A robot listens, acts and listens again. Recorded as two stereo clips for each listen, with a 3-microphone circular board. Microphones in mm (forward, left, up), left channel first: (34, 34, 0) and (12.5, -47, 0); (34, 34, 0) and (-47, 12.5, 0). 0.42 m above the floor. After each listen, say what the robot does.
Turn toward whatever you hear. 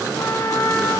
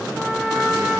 Turn 110° left.
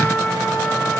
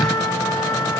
Turn 15° left.
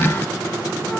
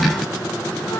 Keep listening.
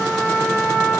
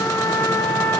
Facing the trumpet, over 4 m away.